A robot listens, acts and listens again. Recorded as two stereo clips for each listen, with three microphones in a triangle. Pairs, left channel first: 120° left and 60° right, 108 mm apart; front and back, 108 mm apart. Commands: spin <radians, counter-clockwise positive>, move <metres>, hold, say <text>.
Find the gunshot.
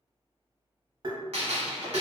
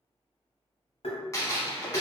spin -1.05
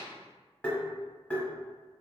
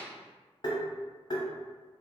say I heard a gunshot from this way, but can't make it out now.